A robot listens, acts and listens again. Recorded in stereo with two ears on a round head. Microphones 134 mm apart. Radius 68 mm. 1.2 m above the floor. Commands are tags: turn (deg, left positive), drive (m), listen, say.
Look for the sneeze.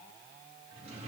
<listen/>
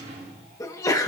<turn deg="20"/>
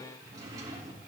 <listen/>
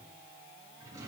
<say>I heard a sneeze, but can't make it out now. It was about straight ahead or 140° left.</say>